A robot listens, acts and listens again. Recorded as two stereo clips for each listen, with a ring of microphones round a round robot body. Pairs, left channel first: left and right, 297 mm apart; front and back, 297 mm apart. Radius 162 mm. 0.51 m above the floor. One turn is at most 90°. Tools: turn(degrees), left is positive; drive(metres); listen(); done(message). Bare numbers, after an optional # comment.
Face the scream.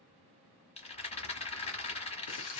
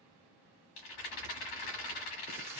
listen()
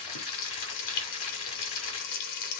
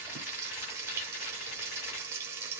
listen()
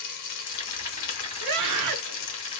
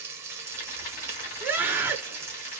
# The scream: 100° right.
turn(-90)
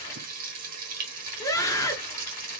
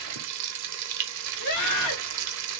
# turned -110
# The scream is now 10° left.
turn(10)
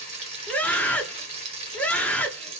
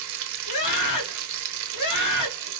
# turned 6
done("Found it: a scream, straight ahead.")